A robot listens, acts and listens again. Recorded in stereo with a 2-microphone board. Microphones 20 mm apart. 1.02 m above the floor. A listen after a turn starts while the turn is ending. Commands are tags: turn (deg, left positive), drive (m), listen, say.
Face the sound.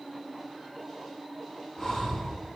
<turn deg="35"/>
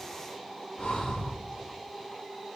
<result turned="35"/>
<turn deg="110"/>
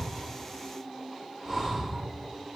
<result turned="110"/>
<turn deg="-20"/>
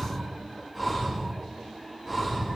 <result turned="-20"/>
<say>Found it: breathing, straight ahead, 2 to 4 m away.</say>